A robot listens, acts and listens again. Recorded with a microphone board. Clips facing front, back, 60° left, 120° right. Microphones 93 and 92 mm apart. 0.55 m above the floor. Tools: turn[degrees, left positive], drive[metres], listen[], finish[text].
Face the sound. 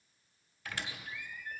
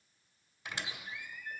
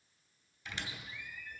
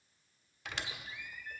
Thought: The squeak: 110° right.
Action: turn[-110]
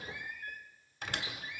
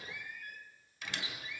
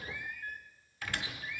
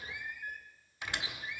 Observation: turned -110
Thought: The squeak is now 50° right.
Action: turn[-50]
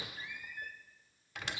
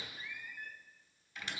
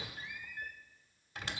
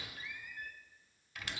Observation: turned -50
Action: finish[Found it: a squeak, straight ahead.]